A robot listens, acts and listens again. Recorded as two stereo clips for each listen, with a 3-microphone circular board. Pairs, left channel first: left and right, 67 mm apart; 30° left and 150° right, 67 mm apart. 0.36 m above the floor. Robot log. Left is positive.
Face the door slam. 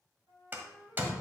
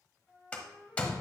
note: The door slam: 35° right.
cmd yaw -35
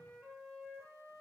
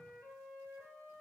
end: Facing where the door slam came from. I can't hear it now.